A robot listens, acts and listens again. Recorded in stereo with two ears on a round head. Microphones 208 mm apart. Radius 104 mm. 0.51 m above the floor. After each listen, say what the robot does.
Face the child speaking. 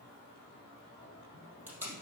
Keep listening.
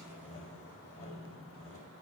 Keep listening.
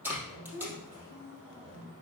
Turn 60° right.
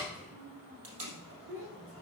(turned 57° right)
Turn 65° right.
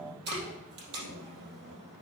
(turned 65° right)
Keep listening.
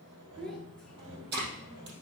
Facing the child speaking.